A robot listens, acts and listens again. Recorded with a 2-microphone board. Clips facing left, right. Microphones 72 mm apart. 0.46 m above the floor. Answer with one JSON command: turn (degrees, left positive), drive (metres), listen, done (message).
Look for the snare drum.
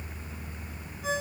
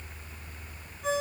{"listen": true}
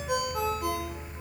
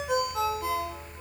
{"listen": true}
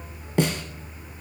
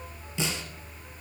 {"turn": 55}
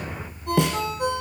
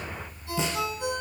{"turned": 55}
{"turn": 70}
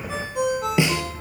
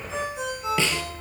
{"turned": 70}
{"turn": 20}
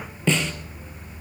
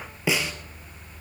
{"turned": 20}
{"done": "Facing the snare drum, 1 to 2 m away."}